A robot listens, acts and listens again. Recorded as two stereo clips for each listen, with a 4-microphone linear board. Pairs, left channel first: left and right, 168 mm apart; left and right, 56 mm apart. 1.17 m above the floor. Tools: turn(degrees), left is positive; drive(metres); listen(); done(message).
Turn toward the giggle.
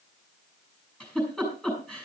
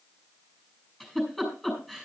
turn(degrees=30)
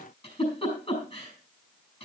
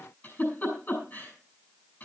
turn(degrees=145)
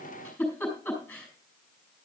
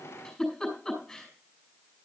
turn(degrees=10)
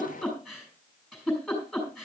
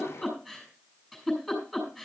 done("Facing the giggle.")